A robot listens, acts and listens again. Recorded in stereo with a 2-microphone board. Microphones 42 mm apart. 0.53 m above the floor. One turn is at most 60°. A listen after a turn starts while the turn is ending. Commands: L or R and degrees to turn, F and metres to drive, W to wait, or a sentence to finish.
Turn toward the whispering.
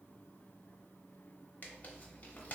W
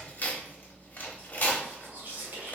R50
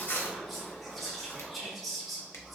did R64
Facing the whispering, 1 to 2 m away.